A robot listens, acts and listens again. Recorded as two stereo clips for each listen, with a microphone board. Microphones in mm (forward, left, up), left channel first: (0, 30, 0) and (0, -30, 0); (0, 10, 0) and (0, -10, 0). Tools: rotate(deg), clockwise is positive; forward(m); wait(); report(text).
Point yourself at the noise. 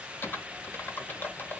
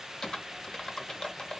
rotate(-35)
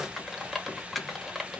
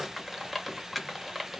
report("Found it: typing on a keyboard, straight ahead, under 1 m away.")